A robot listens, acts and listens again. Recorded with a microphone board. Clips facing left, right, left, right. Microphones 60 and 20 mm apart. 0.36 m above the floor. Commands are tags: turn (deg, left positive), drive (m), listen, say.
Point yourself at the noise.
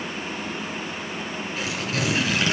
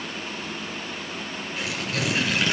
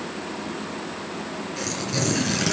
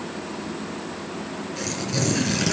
<turn deg="30"/>
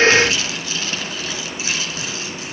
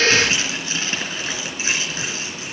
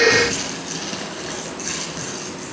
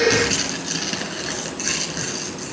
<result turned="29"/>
<turn deg="-25"/>
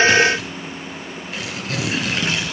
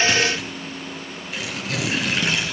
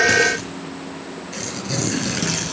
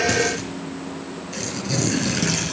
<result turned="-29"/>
<say>Facing the tearing paper, 2 to 4 m away.</say>